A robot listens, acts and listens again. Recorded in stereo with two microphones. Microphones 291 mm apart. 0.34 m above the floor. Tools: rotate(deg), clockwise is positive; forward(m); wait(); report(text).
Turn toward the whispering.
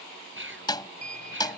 rotate(40)
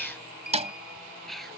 report("Found it: whispering, straight ahead.")